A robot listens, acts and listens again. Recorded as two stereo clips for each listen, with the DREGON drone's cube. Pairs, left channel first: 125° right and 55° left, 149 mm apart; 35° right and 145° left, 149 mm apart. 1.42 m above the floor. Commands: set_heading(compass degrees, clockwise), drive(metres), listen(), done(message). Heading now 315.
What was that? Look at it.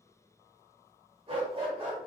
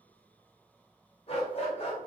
set_heading(305)
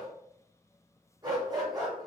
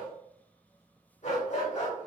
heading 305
done("Facing the dog barking, 2 to 4 m away.")